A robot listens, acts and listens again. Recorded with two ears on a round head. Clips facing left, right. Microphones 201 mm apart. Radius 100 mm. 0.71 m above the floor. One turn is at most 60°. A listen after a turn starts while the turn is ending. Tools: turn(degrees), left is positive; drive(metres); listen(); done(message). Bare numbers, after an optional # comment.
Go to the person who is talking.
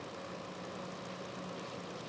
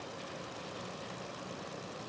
listen()
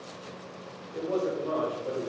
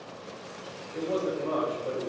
turn(30)
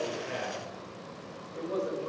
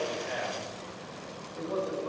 # So it is at 145° left.
turn(60)
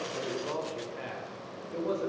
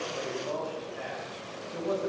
# The man speaking is now 105° left.
turn(60)
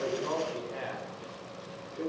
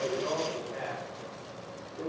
# The man speaking is now 40° left.
turn(40)
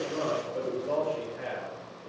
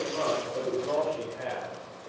drive(1.0)
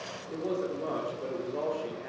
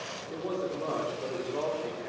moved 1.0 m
drive(1.0)
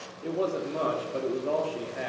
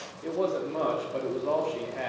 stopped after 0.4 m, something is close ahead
# The man speaking is now 10° left.
turn(10)
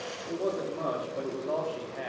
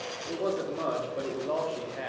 done("Arrived at the man speaking, straight ahead.")